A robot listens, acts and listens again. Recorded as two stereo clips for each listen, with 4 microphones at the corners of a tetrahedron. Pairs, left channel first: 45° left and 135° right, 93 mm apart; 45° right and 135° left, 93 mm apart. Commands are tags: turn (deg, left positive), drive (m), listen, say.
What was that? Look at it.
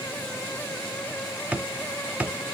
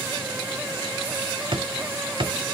<turn deg="150"/>
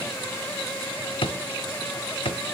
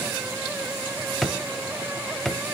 <turn deg="40"/>
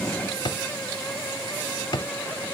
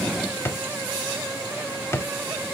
<turn deg="15"/>
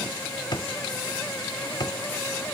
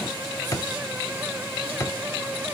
<say>Facing the drawer.</say>